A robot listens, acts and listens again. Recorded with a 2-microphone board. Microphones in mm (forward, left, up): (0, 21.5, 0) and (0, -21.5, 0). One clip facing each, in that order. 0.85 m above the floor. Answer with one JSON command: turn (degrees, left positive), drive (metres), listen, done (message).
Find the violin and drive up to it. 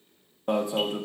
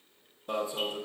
{"listen": true}
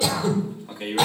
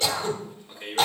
{"listen": true}
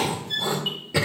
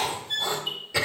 {"turn": -30}
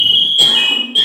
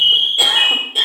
{"listen": true}
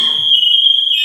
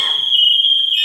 {"listen": true}
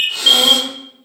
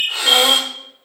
{"done": "I heard a violin, but can't make it out now. It was about 20° left or 140° right. I did not reach it."}